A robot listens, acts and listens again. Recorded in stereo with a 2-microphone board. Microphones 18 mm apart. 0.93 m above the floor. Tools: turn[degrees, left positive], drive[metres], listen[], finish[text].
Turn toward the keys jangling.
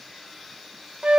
Action: listen[]
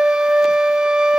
Action: listen[]
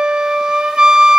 Action: finish[I can't make out keys jangling to turn to.]